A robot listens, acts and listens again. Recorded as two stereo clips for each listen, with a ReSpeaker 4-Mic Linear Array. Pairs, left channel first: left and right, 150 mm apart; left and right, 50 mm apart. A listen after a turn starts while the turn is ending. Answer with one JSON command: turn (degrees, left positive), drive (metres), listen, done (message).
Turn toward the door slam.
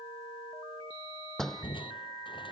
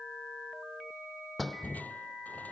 {"turn": 30}
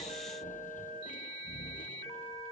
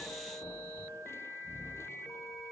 {"listen": true}
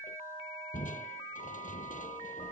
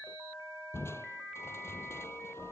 {"done": "I heard a door slam, but can't make it out now. It was about 25° right or 145° left."}